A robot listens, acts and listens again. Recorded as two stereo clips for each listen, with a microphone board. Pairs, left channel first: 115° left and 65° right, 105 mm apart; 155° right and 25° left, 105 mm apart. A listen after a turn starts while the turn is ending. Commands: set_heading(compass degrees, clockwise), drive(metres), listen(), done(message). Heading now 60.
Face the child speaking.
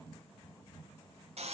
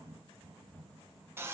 listen()
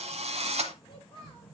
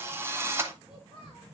set_heading(260)
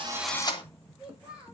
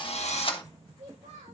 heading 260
set_heading(245)
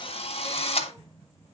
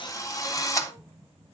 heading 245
listen()
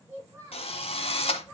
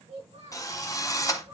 done("Facing the child speaking, over 4 m away.")